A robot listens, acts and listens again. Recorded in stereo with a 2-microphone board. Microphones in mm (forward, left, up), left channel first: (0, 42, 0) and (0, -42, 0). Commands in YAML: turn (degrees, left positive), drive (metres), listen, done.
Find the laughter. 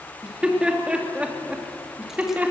turn: -20
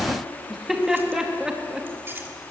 turn: -30
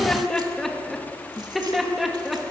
done: "Found it: laughter, straight ahead."